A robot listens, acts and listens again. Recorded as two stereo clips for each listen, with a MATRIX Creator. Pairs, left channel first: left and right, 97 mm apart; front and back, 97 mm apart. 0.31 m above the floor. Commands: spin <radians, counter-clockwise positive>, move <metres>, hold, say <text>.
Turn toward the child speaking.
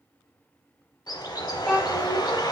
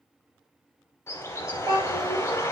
spin 2.88
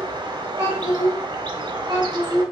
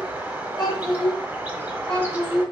spin -0.87
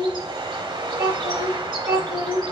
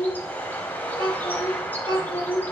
say Facing the child speaking, 2 to 4 m away.